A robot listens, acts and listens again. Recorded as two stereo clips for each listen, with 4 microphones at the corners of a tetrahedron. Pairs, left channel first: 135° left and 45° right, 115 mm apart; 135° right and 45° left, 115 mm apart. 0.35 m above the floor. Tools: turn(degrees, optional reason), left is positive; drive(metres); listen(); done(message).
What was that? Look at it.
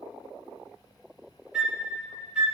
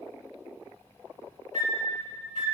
turn(degrees=35, reason="The flute: 35° left.")
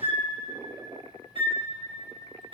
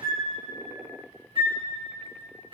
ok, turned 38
done("Facing the flute, 2 to 4 m away.")